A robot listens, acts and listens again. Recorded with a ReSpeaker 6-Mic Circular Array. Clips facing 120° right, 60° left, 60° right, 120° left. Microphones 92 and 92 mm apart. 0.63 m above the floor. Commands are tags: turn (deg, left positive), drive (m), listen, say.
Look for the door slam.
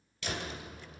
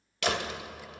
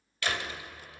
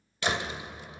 <turn deg="50"/>
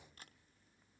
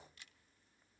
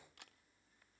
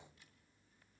<say>Facing where the door slam came from. I can't hear it now.</say>